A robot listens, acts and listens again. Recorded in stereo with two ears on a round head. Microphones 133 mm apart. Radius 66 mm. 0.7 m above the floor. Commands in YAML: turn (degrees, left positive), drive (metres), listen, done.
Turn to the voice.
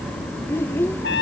turn: 15
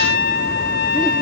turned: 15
listen: true
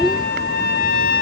done: "Facing the child speaking."